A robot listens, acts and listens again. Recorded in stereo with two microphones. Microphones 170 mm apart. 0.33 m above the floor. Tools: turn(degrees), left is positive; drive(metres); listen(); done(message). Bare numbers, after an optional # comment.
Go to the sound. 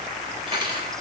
# The cutlery clinking: about 30° right or 150° right.
turn(-30)
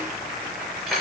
drive(1.0)
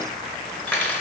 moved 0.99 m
# The cutlery clinking is now 10° left.
turn(10)
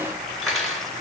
drive(1.0)
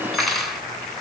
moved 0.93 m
drive(1.0)
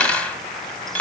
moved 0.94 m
# The cutlery clinking is now 10° left.
turn(10)
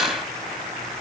drive(1.0)
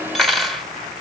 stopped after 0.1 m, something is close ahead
done("I am next to the cutlery clinking.")